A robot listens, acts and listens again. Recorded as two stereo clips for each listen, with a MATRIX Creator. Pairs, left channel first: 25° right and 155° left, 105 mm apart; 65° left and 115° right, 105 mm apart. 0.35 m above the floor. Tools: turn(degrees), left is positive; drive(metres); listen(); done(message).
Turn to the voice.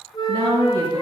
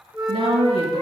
turn(degrees=-145)
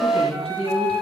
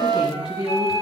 turn(degrees=-30)
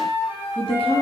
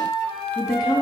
turn(degrees=10)
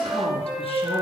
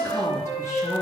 listen()
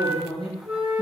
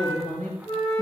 done("Facing the woman speaking.")